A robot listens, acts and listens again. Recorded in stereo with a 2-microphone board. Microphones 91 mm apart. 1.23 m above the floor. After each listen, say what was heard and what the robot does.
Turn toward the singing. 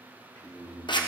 The singing: about 55° left or 125° left. Turn 55° left.
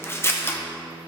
So it is at 35° left. Turn 35° left.
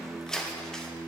Facing the singing.